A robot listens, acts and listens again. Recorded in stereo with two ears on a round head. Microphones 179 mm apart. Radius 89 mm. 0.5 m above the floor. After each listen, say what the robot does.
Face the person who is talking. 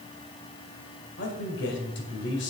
Turn 60° left.
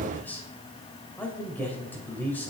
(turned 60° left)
Turn 10° left.
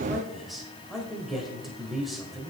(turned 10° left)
Facing the man speaking, 2 to 4 m away.